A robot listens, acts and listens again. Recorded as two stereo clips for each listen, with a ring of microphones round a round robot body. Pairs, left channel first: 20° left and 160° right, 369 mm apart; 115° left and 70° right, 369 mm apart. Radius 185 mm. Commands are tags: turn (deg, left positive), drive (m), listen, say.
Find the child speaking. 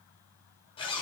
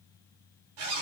<listen/>
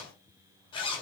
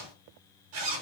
<listen/>
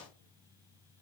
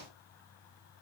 <say>I can't make out a child speaking to turn to.</say>